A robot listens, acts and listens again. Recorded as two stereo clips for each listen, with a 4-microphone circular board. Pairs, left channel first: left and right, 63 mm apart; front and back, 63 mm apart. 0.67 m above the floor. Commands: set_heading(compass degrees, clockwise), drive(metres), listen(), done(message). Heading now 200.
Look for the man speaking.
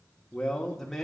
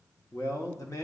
done("Facing the man speaking.")